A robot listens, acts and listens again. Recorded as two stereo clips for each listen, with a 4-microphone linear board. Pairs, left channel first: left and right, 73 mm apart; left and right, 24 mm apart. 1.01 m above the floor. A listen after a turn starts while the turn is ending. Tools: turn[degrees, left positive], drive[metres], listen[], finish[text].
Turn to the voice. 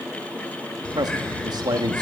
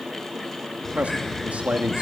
Thought: The man speaking: about 70° right or 110° right.
Action: turn[-70]
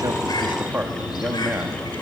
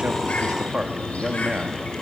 Thought: So it is at 25° right.
Action: turn[-25]
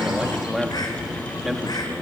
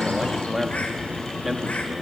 Action: finish[Found it: a man speaking, straight ahead.]